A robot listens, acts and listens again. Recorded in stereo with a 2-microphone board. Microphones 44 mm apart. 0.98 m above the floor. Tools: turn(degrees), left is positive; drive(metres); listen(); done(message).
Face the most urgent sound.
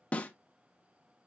listen()
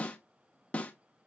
listen()
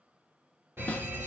turn(degrees=-60)
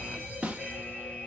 turn(degrees=-20)
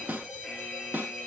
done("Found it: a fire alarm, straight ahead.")